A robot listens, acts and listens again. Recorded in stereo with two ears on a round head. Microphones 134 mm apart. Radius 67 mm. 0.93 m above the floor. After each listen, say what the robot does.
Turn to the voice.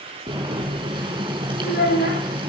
Turn 65° left.
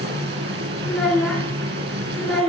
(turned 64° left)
Facing the child speaking.